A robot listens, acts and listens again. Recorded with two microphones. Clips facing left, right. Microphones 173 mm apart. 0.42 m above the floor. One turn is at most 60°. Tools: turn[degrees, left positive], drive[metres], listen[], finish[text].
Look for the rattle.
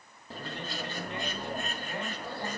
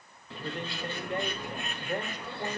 Action: listen[]
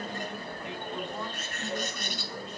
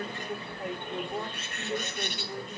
Action: listen[]
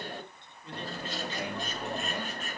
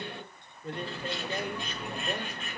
Action: finish[I can't make out a rattle to turn to.]